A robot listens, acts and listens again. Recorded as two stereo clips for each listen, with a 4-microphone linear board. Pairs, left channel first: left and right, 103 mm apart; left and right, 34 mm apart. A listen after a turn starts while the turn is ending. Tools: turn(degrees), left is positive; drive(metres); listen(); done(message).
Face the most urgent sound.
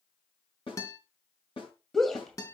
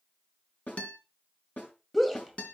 turn(degrees=30)
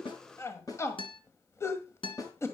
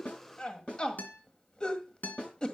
turn(degrees=150)
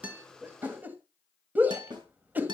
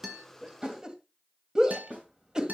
turn(degrees=-20)
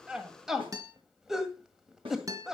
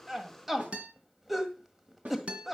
done("Facing the shout, 1 to 2 m away.")